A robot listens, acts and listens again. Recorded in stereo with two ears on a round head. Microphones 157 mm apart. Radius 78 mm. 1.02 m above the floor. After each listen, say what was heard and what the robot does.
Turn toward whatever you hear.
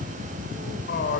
The man speaking: about 60° left or 120° left. Turn 60° left.
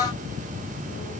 Keep listening.
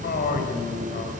So it is at 50° left. Turn 50° left.
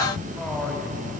Facing the man speaking, over 4 m away.